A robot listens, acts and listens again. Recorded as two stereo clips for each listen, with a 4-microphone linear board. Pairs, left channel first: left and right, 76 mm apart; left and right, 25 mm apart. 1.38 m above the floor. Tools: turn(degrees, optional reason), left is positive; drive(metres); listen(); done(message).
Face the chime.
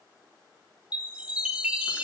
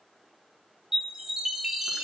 turn(degrees=-15, reason="The chime: about 15° right or 165° right.")
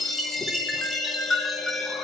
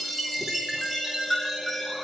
done("Facing the chime.")